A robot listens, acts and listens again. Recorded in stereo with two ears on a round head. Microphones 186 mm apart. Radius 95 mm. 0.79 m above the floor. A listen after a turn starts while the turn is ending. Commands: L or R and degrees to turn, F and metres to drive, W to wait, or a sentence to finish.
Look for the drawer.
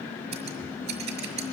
W
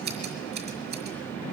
W
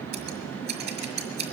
I can't make out a drawer to turn to.